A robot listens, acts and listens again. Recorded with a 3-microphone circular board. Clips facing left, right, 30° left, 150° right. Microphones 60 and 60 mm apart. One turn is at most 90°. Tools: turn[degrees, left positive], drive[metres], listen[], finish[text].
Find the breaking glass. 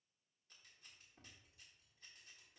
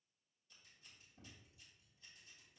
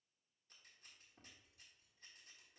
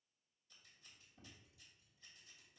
Action: listen[]
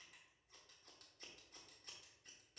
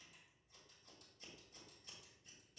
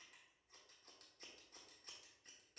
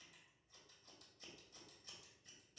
Action: listen[]
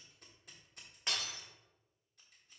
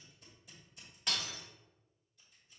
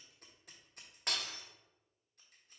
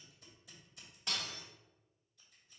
Thought: The breaking glass: 30° left.
Action: turn[30]
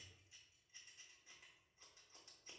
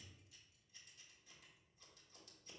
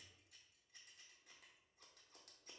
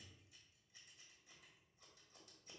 Action: finish[Facing where the breaking glass came from. I can't hear it now.]